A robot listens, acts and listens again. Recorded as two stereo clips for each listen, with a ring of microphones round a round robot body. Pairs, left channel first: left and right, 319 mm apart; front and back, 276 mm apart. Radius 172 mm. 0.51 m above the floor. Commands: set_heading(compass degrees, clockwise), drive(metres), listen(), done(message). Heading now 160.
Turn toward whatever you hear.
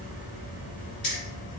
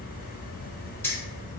set_heading(80)
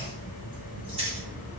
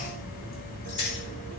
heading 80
set_heading(100)
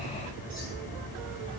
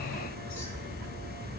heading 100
listen()
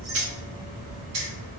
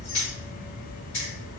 set_heading(155)
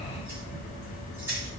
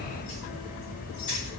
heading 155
set_heading(165)
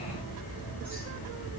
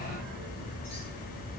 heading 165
listen()
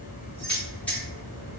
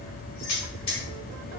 done("Found it: keys jangling, straight ahead, 1 to 2 m away.")